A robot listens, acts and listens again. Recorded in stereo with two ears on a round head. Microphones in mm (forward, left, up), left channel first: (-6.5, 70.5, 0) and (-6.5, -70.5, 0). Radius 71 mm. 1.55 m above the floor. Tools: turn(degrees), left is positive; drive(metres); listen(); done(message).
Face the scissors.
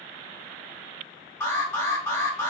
listen()
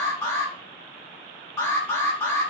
listen()
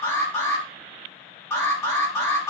done("I can't make out scissors to turn to.")